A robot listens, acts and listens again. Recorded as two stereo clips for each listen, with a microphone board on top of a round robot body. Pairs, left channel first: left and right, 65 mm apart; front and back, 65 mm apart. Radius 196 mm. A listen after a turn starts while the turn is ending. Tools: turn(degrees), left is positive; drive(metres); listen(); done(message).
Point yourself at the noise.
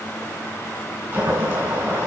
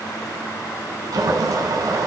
turn(degrees=-160)
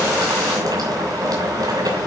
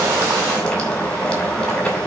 turn(degrees=-80)
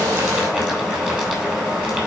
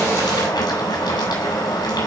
turn(degrees=-15)
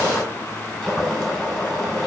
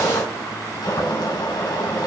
done("Facing the boiling, over 4 m away.")